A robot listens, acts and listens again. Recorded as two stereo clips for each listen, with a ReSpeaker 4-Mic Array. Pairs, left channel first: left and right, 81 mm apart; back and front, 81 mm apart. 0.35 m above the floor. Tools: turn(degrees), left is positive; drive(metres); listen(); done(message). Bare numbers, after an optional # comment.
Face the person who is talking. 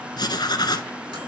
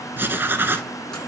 listen()
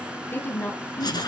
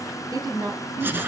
# The woman speaking: 30° left.
turn(30)
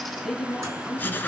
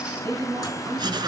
done("Facing the woman speaking, 2 to 4 m away.")